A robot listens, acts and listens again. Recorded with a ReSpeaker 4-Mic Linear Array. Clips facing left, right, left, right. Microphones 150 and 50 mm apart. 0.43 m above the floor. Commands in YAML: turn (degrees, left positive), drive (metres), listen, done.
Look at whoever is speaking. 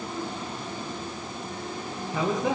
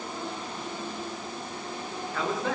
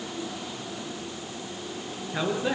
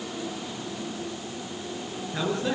turn: 30
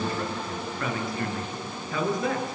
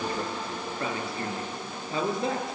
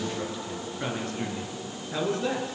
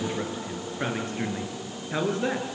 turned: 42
turn: -25
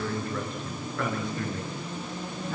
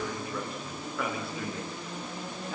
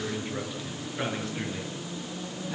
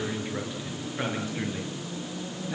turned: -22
done: "Found it: a man speaking, straight ahead, over 4 m away."